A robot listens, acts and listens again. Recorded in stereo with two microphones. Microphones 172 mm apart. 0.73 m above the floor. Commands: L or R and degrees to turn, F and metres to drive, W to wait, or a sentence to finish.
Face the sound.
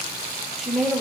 L30
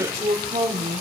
R30
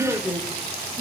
Found it: a woman speaking, straight ahead.